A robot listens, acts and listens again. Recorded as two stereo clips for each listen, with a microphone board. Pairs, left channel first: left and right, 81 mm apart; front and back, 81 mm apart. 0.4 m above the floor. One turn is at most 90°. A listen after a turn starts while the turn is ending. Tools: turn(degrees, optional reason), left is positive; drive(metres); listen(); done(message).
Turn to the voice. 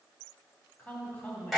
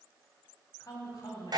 turn(degrees=25, reason="The woman speaking: 25° left.")
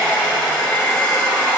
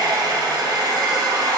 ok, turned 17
turn(degrees=10, reason="Nothing new. It was at 10° left.")
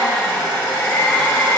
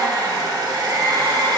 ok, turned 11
listen()
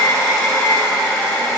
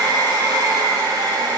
done("Facing where the woman speaking came from. I can't hear it now.")